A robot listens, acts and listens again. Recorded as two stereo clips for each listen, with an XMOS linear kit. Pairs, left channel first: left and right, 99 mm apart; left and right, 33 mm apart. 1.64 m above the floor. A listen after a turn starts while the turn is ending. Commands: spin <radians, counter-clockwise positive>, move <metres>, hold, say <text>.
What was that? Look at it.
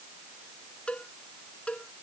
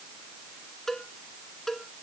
spin 0.52
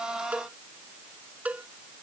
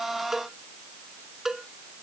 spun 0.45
spin -0.26
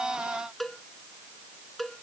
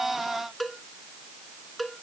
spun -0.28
say Found it: a cowbell, straight ahead.